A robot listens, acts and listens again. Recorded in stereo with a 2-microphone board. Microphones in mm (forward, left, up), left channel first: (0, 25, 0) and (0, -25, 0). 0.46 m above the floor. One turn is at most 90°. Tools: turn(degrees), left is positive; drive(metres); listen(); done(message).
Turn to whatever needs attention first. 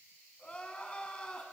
turn(degrees=20)
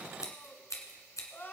turn(degrees=90)
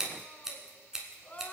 turn(degrees=35)
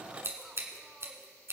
listen()
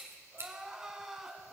turn(degrees=-10)
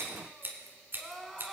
done("Facing the crying.")